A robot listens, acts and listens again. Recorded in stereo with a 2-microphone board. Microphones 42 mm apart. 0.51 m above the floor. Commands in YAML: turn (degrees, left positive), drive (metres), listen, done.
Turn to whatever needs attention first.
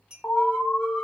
turn: 35
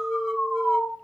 done: "Facing the alarm."